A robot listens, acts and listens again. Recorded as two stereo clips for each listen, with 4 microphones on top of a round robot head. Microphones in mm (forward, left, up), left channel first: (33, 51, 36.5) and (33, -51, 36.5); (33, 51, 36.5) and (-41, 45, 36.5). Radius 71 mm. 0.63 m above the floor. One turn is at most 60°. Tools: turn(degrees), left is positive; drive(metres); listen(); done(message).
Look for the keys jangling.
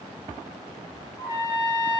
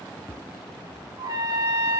listen()
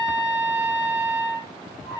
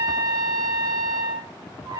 listen()
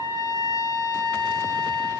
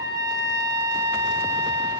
done("I can't make out keys jangling to turn to.")